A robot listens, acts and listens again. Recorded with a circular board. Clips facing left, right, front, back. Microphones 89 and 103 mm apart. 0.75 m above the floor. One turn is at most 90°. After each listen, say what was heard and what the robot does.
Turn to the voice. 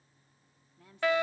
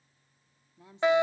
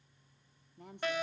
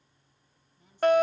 The woman speaking: 20° right. Turn 20° right.
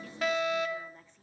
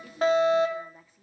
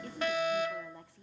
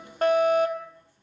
Facing the woman speaking.